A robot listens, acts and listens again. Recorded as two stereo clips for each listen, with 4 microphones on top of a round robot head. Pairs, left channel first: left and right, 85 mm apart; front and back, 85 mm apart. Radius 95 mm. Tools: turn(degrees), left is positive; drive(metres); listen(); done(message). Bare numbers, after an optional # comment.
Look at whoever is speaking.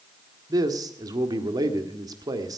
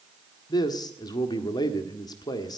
# The man speaking: 45° right.
turn(-45)
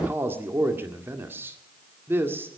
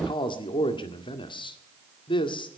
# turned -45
# The man speaking is now 25° right.
turn(-25)
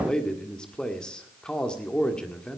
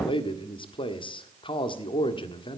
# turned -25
# The man speaking is now 10° left.
turn(10)
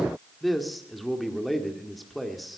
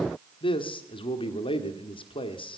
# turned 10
done("Facing the man speaking.")